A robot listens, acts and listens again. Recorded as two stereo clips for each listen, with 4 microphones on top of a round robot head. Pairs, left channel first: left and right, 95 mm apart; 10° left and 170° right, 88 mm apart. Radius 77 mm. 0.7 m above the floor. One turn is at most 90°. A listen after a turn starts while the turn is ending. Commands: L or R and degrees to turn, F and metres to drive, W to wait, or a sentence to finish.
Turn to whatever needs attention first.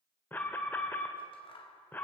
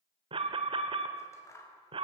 L90
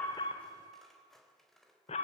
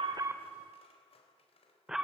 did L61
L90
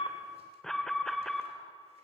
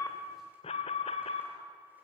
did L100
Found it: an alarm, straight ahead, 1 to 2 m away.